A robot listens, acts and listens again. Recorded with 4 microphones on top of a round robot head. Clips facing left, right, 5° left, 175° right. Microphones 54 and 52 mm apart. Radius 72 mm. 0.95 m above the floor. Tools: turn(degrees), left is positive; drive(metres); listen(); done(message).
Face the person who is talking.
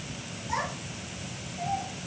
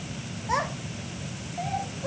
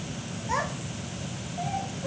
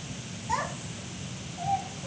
turn(degrees=-60)
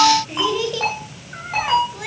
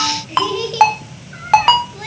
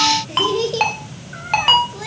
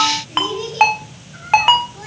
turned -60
turn(degrees=10)
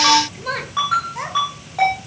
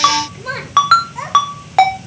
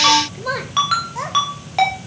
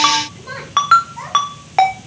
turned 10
done("Facing the child speaking.")